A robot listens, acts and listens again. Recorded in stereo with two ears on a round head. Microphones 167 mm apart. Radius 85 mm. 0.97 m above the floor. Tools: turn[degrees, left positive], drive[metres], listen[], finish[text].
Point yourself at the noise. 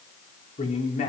Thought: The man speaking: about 35° left or 145° left.
Action: turn[35]
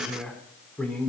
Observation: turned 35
Action: finish[Found it: a man speaking, straight ahead.]